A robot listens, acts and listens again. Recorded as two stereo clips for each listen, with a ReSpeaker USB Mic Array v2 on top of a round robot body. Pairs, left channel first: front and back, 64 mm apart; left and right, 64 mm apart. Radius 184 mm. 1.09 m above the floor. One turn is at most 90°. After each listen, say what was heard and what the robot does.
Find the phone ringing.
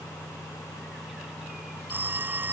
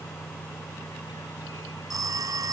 The phone ringing: 120° right. Turn 90° right.
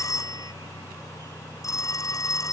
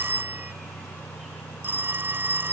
The phone ringing is now 30° right. Turn 30° right.
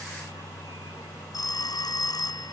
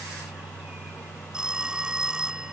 The phone ringing is now 15° right. Turn 15° right.
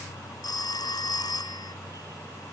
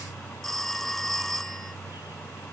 Facing the phone ringing.